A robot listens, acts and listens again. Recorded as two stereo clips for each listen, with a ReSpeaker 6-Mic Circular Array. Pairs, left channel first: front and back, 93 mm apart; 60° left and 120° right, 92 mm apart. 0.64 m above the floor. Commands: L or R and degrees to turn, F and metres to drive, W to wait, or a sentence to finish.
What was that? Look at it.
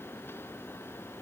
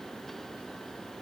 W
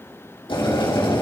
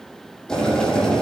R25
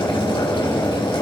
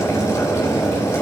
Facing the boiling.